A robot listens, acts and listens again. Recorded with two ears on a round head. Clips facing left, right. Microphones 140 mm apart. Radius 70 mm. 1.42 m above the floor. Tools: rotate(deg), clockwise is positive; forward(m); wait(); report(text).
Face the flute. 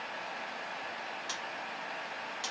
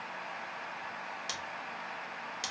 wait()
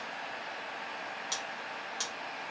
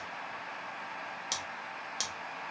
wait()
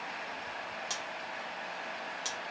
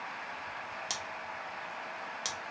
report("I can't make out a flute, only scissors.")